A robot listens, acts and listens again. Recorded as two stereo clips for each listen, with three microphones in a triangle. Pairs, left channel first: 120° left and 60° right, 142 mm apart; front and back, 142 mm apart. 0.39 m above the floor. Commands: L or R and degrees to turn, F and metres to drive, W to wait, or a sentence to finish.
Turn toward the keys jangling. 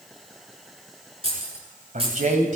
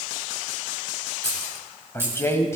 R105
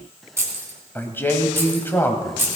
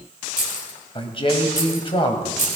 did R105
L10
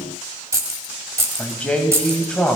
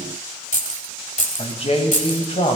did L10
Found it: keys jangling, straight ahead.